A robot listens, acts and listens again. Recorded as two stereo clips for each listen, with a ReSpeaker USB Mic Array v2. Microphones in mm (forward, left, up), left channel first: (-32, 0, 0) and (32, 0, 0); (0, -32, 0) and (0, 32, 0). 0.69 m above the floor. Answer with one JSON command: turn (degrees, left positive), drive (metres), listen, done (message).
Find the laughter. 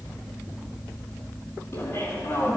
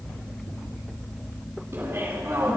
{"turn": 140}
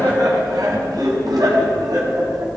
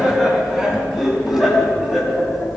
{"done": "Facing the laughter."}